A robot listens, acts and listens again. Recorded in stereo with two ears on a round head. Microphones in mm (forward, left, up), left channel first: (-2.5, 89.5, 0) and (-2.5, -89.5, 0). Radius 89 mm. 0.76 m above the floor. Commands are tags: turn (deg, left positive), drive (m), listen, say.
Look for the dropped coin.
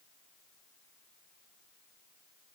<listen/>
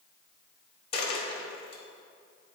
<turn deg="30"/>
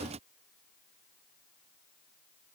<listen/>
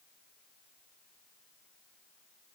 <say>I heard a dropped coin, but can't make it out now. It was about straight ahead or 120° left.</say>